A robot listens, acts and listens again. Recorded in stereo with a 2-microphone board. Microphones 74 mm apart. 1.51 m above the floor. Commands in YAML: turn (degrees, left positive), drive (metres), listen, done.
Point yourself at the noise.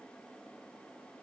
listen: true
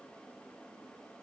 listen: true
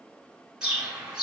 turn: -30
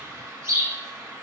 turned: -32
turn: -140
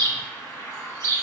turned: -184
turn: 45
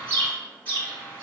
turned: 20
turn: 25
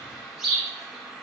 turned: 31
done: "Facing the bird, 1 to 2 m away."